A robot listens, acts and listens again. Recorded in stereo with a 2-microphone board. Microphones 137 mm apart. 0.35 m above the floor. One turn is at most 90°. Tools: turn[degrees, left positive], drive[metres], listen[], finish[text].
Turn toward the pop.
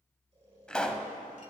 Action: turn[30]
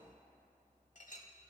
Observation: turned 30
Action: listen[]
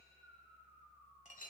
Action: finish[I heard a pop, but can't make it out now. It was about 25° right or 145° left.]